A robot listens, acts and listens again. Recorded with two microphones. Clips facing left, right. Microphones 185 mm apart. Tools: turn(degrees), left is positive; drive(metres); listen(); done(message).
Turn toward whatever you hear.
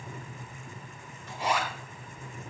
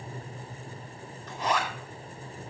turn(degrees=30)
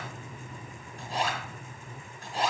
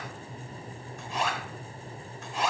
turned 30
turn(degrees=140)
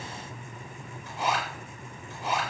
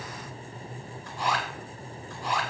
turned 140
turn(degrees=25)
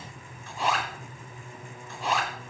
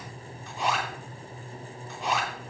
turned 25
done("Facing the zipper.")